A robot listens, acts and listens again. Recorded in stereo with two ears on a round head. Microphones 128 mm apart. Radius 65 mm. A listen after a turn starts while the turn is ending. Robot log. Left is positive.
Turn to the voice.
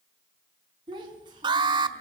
note: The child speaking: about 30° right or 150° right.
cmd yaw -30
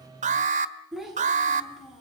end: Found it: a child speaking, straight ahead, over 4 m away.